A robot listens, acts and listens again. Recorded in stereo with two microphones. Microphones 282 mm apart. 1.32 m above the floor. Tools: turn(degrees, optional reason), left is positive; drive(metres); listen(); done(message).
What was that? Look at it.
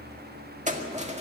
turn(degrees=-25, reason="The keys jangling: about 25° right or 155° right.")
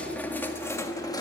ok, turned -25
turn(degrees=15, reason="So it is at 15° left.")
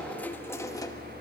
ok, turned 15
turn(degrees=15, reason="The keys jangling is now 15° left.")
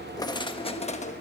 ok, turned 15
turn(degrees=25, reason="The keys jangling is now 25° left.")
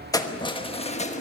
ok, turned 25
turn(degrees=25, reason="The keys jangling is now 25° left.")
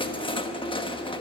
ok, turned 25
turn(degrees=20, reason="The keys jangling is now 20° left.")
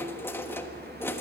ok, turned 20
turn(degrees=10, reason="The keys jangling is now 10° left.")
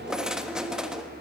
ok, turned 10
done("Facing the keys jangling.")